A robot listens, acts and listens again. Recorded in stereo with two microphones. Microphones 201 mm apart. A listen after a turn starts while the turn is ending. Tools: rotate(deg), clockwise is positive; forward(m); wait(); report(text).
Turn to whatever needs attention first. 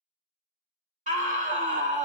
rotate(40)
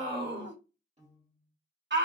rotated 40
rotate(95)
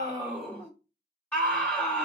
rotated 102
report("Facing the scream.")